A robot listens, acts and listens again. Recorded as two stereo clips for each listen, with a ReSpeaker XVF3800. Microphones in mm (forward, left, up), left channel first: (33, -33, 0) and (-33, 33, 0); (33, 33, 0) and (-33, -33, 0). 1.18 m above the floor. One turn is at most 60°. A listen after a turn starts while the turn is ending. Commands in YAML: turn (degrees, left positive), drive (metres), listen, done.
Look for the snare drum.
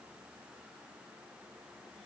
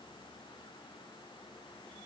listen: true
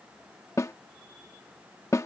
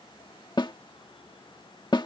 turn: 10
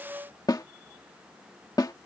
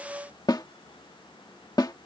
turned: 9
done: "Facing the snare drum."